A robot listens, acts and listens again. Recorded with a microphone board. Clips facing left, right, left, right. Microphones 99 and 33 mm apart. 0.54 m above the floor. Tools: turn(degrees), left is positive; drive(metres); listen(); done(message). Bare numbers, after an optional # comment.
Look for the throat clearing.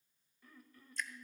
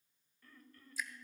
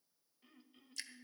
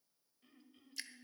turn(30)
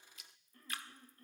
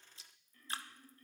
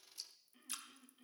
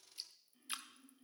# So it is at 140° left.
turn(140)
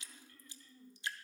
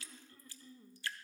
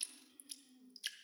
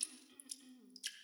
# The throat clearing is now 25° right.
turn(-25)
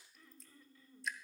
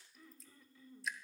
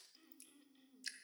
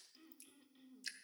done("Found it: throat clearing, straight ahead, 1 to 2 m away.")